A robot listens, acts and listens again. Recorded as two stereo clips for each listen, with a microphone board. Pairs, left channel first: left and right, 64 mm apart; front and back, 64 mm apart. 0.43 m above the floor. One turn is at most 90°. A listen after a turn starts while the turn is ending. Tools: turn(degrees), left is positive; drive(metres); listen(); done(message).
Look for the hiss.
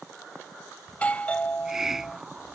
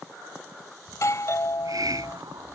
turn(degrees=-90)
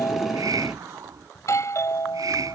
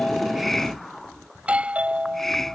turn(degrees=-85)
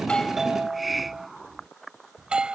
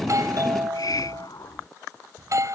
done("Found it: a hiss, straight ahead.")